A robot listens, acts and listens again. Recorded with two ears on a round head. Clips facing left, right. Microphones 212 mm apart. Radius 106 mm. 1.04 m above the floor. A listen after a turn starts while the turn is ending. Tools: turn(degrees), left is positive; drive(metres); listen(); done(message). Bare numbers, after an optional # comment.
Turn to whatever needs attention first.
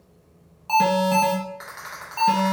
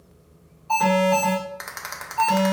# The alarm: about 70° left or 110° left.
turn(70)
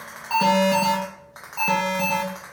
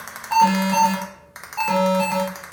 # So it is at 30° left.
turn(30)
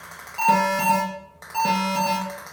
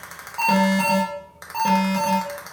# The alarm is now 10° left.
turn(10)
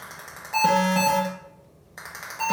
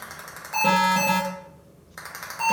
done("Facing the alarm.")